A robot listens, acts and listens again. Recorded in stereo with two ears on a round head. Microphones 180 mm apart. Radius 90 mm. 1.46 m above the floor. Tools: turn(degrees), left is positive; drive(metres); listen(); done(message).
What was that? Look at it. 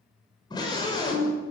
turn(degrees=20)
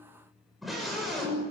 done("Found it: a scream, straight ahead.")